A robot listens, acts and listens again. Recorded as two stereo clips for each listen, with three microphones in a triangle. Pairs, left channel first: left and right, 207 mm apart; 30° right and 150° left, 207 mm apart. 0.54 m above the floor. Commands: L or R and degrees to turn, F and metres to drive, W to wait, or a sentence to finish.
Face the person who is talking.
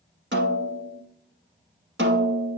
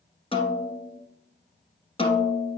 W
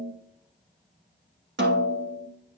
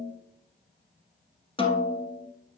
W
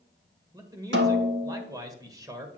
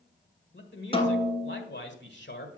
R20
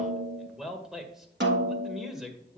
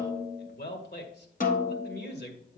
Found it: a man speaking, straight ahead.